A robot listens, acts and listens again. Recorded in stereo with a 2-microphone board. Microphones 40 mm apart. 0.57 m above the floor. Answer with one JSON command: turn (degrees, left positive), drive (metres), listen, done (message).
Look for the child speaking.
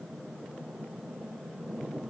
{"listen": true}
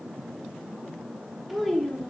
{"turn": 30}
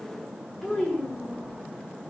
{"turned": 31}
{"turn": 15}
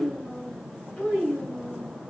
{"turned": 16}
{"turn": 15}
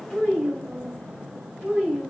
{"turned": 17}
{"turn": 30}
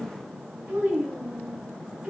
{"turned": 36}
{"turn": -35}
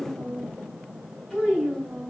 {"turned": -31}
{"done": "Found it: a child speaking, straight ahead, 2 to 4 m away."}